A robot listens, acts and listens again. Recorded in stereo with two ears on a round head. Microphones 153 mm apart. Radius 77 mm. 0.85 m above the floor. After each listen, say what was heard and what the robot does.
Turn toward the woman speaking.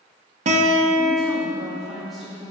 Turn 30° left.
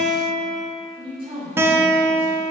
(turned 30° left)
So it is at 30° right. Turn 30° right.
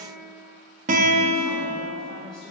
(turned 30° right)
Found it: a woman speaking, straight ahead.